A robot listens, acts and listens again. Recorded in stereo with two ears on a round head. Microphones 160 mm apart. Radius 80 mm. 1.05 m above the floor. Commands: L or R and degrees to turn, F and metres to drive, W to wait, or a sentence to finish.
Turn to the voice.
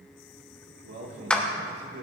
R60
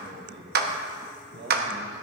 R55
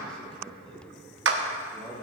Facing the man speaking, 1 to 2 m away.